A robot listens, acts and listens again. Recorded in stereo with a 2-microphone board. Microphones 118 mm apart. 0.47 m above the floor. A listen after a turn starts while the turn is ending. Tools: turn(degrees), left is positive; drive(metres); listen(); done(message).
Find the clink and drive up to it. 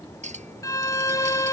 turn(degrees=-90)
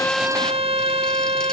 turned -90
listen()
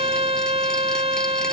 listen()
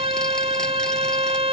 done("I heard a clink from this way, but can't make it out now. I did not reach it.")